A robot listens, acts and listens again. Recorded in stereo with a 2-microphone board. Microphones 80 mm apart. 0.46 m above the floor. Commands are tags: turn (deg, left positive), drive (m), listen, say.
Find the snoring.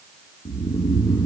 <turn deg="55"/>
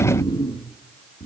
<turn deg="70"/>
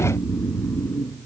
<turn deg="25"/>
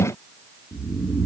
<say>Found it: snoring, straight ahead.</say>